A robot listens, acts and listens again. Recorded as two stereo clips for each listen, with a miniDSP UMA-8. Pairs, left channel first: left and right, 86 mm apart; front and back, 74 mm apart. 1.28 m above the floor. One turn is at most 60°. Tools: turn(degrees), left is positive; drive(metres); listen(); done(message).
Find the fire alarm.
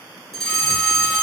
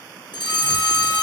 done("Found it: a fire alarm, straight ahead, 1 to 2 m away.")